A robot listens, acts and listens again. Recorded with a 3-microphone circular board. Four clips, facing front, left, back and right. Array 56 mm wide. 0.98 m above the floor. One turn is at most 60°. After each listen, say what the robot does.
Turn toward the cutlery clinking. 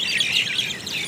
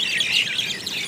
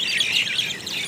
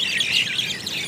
Keep listening.
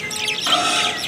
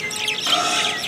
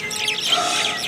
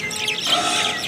Turn 20° left.
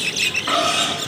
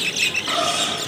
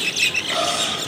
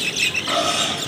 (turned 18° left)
Facing the cutlery clinking, over 4 m away.